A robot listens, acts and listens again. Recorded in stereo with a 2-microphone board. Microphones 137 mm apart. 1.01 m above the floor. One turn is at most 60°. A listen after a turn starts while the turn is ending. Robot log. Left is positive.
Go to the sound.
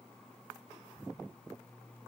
cmd idle
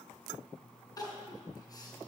note: The crying: about 25° left or 155° left.
cmd yaw +25
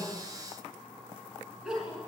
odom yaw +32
cmd fwd 1.0
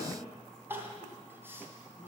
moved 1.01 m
note: The crying is now 20° right.
cmd yaw -20
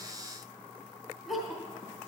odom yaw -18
cmd fwd 1.0
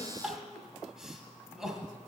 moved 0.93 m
cmd fwd 1.0
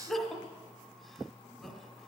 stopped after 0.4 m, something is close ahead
end: I am next to the crying.